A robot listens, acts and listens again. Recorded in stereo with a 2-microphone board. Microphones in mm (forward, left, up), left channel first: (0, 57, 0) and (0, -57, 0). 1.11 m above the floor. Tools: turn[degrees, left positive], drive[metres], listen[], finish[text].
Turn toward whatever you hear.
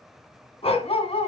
Thought: The dog barking: about 65° left or 115° left.
Action: turn[65]
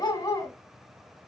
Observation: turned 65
Thought: So it is at 35° left.
Action: turn[35]
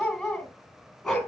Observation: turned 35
Action: finish[Facing the dog barking, 2 to 4 m away.]